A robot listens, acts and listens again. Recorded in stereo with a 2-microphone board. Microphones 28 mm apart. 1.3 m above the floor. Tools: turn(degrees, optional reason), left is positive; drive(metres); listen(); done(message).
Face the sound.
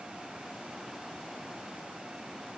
listen()
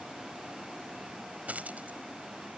turn(degrees=-90)
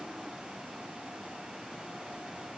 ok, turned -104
turn(degrees=15, reason="Nothing new. It was at 15° left.")
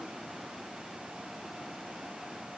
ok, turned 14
done("I heard a dropped coin from this way, but can't make it out now.")